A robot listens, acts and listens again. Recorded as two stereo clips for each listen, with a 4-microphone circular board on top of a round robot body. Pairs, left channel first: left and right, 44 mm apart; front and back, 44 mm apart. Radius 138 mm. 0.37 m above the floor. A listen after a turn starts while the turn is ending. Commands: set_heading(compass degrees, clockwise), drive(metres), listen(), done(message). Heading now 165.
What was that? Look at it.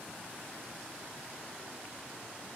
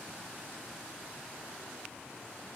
listen()
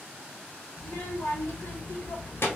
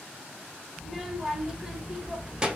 set_heading(50)
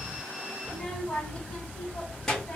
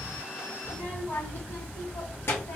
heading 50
set_heading(35)
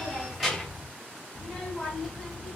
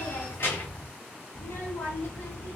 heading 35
done("Found it: a child speaking, straight ahead, 1 to 2 m away.")